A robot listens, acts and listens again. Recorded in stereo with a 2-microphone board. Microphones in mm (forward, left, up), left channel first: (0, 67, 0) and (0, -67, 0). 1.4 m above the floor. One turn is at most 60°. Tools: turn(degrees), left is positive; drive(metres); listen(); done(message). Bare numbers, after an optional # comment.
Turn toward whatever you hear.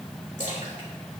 # The splash: about 65° left or 115° left.
turn(60)
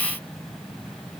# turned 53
listen()
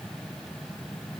done("I heard a splash, but can't make it out now. It was about 15° left or 60° left.")